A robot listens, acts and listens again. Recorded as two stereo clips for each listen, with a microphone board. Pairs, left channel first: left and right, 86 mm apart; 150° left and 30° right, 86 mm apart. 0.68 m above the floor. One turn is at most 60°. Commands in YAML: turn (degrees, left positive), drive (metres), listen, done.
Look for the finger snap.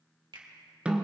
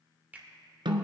turn: -60
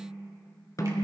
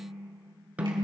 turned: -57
turn: -40
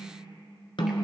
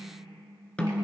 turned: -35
listen: true
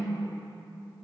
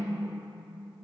done: "Facing where the finger snap came from. I can't hear it now."